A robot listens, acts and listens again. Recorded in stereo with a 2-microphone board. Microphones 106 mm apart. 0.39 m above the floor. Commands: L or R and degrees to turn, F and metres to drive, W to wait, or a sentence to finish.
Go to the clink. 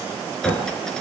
L30
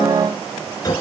L145
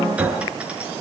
R10
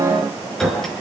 F1.0
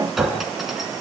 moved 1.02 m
F1.0
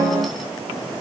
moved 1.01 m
W
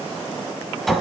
F1.0
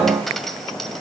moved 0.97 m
F1.0
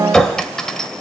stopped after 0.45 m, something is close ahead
L10
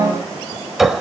Arrived at the clink, straight ahead.